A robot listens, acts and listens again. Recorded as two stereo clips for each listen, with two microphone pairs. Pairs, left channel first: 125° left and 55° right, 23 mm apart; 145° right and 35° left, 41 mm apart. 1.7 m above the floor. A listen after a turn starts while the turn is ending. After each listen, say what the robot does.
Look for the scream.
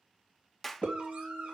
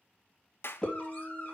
Turn 85° right.
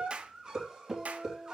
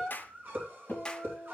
Facing the scream.